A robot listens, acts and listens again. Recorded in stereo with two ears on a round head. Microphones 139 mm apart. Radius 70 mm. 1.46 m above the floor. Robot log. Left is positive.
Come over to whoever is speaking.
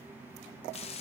cmd idle
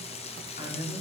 note: The man speaking: about 45° left or 135° left.
cmd yaw +45
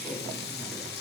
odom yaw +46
cmd idle
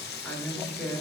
cmd fwd 1.0
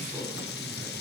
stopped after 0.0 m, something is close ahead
end: Something is in my way. I am facing the man speaking but have not reached it.